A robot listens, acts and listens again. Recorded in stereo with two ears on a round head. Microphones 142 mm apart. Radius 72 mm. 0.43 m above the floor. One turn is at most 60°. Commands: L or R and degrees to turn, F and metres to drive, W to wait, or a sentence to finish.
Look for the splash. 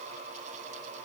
W
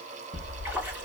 R30
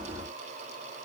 W
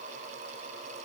I heard a splash, but can't make it out now. It was about 20° left or 140° right.